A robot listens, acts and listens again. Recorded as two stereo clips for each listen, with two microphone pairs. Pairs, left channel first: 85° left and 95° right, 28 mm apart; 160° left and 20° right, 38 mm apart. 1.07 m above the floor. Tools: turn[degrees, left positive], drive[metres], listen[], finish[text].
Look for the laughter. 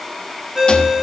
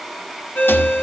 Action: listen[]
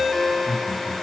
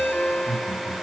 Thought: The laughter: 80° right.
Action: turn[-80]
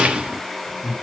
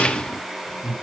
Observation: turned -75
Action: finish[Facing the laughter, over 4 m away.]